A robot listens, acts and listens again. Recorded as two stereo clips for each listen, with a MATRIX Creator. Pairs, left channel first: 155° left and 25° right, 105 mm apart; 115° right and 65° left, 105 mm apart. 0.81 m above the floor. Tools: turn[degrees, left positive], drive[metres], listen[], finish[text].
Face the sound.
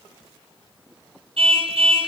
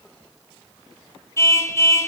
Thought: The car horn: 50° right.
Action: turn[-50]
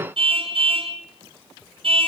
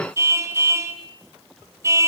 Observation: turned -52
Action: finish[Facing the car horn, 2 to 4 m away.]